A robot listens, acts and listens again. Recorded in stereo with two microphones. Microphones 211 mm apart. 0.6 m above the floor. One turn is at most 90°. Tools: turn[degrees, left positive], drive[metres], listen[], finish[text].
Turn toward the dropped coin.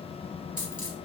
Thought: The dropped coin: about 40° left or 140° left.
Action: turn[40]
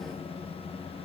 Action: listen[]
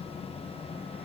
Action: finish[I heard a dropped coin, but can't make it out now. It was about straight ahead or 100° left.]